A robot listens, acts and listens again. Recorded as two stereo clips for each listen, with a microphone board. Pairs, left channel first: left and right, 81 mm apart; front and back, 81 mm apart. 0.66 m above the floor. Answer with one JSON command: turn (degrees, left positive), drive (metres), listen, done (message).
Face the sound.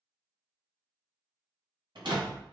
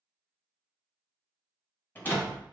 {"turn": -65}
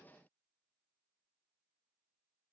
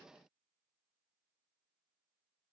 {"done": "I heard a door slam from this way, but can't make it out now."}